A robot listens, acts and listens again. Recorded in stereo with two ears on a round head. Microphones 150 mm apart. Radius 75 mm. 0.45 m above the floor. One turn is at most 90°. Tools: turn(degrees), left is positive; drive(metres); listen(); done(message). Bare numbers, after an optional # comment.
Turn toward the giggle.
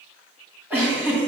turn(-30)
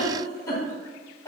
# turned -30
# So it is at 20° left.
turn(20)
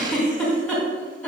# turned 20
done("Facing the giggle, 2 to 4 m away.")